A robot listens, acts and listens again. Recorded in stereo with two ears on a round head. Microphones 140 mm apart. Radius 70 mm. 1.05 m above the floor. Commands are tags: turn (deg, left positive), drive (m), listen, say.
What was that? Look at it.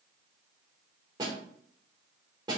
<turn deg="-25"/>
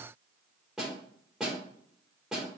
<say>Found it: a snare drum, straight ahead.</say>